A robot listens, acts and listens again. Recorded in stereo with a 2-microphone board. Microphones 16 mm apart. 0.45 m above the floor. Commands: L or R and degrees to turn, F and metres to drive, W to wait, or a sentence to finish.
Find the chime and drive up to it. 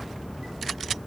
W
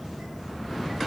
W
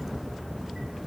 I can't make out a chime to turn to.